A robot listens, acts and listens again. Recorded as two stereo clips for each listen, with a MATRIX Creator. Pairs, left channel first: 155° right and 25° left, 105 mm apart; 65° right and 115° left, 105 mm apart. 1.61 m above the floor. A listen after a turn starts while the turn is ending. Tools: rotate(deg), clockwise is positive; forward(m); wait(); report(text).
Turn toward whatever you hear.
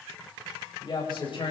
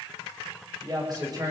rotate(-165)
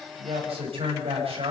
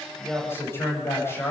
report("Found it: a woman speaking, straight ahead.")